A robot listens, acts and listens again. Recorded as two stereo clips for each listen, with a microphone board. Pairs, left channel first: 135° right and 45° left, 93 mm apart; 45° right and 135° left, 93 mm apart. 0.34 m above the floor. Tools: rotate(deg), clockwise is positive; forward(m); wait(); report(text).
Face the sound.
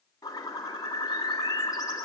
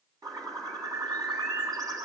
rotate(-175)
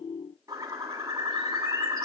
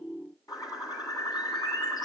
report("Found it: a bird, straight ahead, 2 to 4 m away.")